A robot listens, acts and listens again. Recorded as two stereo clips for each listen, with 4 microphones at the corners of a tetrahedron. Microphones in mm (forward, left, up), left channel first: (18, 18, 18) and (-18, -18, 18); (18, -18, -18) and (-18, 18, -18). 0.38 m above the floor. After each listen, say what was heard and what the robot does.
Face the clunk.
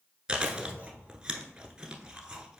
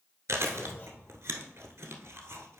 The clunk: 80° right. Turn 80° right.
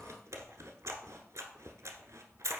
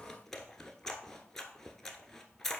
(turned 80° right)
I heard a clunk from this way, but can't make it out now.